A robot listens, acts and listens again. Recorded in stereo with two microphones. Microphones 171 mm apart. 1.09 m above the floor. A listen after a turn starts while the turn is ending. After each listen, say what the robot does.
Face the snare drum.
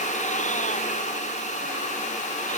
Keep listening.
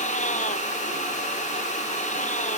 Keep listening.
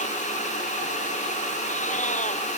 I can't make out a snare drum to turn to.